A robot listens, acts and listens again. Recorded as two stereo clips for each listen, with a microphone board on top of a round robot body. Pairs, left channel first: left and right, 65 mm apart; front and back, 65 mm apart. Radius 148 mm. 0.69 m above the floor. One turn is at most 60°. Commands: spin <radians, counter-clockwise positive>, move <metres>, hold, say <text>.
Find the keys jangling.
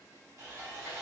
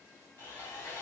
hold
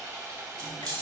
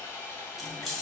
spin -1.05
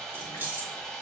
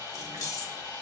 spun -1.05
spin -0.52
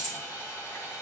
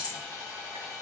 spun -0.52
say Facing the keys jangling, 2 to 4 m away.